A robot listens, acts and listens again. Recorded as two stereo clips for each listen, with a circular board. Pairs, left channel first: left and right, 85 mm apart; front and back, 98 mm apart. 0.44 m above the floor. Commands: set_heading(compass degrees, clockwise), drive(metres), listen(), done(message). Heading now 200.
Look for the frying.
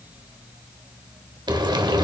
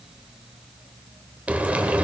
set_heading(305)
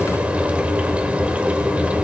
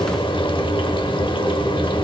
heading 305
set_heading(320)
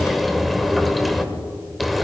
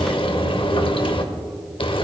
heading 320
done("Found it: frying, straight ahead, under 1 m away.")